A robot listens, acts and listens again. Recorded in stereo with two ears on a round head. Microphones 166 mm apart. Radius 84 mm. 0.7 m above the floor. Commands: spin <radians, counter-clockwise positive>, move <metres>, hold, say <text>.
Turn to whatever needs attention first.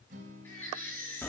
spin 0.52
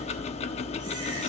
hold
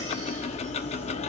hold
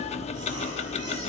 say I heard a baby crying, but can't make it out now. It was about 20° right or 140° left.